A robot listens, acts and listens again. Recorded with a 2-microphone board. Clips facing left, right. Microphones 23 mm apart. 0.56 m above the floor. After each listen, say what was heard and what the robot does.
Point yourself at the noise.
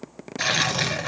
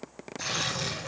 The tearing paper: about 60° left or 120° left. Turn 60° left.
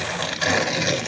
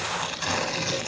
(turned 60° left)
So it is at 60° left. Turn 60° left.
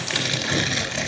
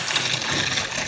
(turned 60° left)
Facing the tearing paper, over 4 m away.